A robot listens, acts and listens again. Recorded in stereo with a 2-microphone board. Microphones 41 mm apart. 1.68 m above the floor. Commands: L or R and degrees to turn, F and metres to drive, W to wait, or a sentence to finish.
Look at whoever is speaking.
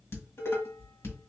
W
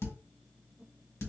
W
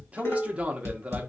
R30
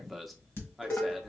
Found it: a man speaking, straight ahead.